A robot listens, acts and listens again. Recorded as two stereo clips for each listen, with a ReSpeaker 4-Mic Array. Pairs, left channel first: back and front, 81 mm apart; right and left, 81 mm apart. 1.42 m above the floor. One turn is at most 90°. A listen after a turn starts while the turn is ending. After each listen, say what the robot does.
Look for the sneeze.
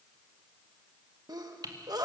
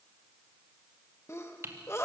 Turn 35° right.
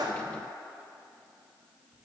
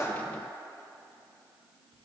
I heard a sneeze from this way, but can't make it out now.